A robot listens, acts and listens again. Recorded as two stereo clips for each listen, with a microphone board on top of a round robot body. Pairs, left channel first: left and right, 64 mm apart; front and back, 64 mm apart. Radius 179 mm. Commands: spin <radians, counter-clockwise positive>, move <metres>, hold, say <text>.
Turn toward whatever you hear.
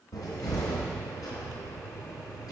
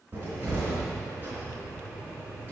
spin 2.09
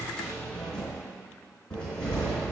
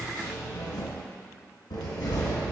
spin 0.17
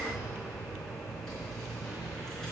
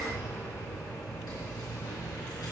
say Facing the cupboard door.